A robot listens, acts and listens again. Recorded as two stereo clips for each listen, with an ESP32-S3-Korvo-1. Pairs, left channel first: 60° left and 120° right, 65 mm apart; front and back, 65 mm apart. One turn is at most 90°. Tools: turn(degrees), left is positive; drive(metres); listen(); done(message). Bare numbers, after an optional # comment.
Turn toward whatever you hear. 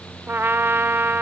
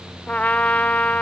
# The trumpet: 70° right.
turn(-70)
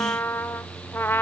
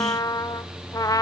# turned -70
# The trumpet is now 10° left.
turn(10)
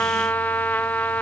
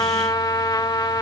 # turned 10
done("Found it: a trumpet, straight ahead.")